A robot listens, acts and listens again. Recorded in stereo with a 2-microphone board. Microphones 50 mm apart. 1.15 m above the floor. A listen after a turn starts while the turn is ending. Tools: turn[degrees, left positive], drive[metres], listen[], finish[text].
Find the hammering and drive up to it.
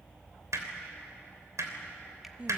Action: turn[-90]
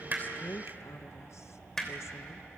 Action: drive[1.0]
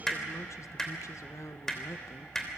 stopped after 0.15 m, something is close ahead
Thought: The hammering is now 10° left.
Action: turn[10]
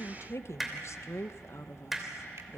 Action: finish[Blocked. The hammering is further on, straight ahead.]